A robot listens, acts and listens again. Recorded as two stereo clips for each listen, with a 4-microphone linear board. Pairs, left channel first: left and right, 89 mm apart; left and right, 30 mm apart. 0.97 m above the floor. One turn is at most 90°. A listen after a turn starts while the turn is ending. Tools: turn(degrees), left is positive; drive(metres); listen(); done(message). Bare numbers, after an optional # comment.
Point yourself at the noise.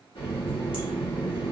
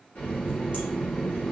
turn(90)
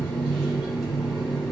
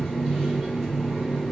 done("Facing the running tap.")